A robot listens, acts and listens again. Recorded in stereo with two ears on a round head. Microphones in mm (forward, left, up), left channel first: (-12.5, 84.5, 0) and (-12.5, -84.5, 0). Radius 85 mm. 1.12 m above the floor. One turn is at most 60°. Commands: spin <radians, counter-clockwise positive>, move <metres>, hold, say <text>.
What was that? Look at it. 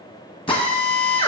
spin 0.52
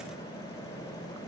hold
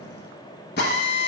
spin 1.05
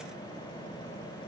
spin 1.05
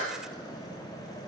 hold
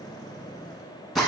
say Facing the drill, 1 to 2 m away.